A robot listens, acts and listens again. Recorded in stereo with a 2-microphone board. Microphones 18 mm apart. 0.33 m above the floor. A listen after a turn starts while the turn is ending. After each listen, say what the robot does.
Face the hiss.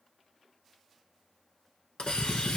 Turn 90° left.
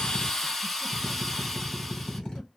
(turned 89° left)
Turn 10° left.
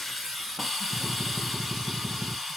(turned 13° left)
Found it: a hiss, straight ahead, 1 to 2 m away.